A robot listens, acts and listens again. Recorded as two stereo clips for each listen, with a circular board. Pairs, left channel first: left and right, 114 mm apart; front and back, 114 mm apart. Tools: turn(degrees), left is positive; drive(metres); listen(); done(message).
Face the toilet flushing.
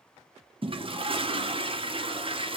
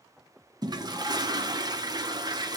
turn(degrees=-130)
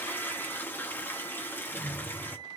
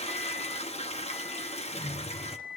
turn(degrees=15)
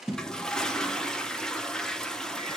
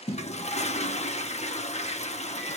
done("Found it: a toilet flushing, straight ahead.")